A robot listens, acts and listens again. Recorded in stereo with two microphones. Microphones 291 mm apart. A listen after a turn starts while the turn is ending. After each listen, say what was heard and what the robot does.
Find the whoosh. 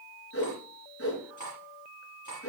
The whoosh: about 50° left or 130° left. Turn 50° left.
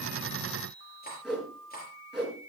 Facing the whoosh, over 4 m away.